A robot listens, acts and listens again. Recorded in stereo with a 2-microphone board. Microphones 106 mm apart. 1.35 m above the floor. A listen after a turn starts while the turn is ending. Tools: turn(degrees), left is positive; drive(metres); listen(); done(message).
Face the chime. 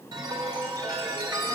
turn(degrees=-40)
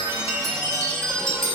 done("Facing the chime, 2 to 4 m away.")